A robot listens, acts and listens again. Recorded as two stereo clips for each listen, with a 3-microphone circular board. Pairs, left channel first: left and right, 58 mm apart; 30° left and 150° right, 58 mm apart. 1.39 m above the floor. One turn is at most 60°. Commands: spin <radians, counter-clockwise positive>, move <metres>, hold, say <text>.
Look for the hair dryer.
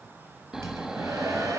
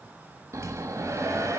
spin -1.05
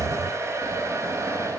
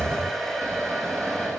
spin -0.96
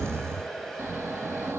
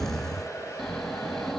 say Facing the hair dryer.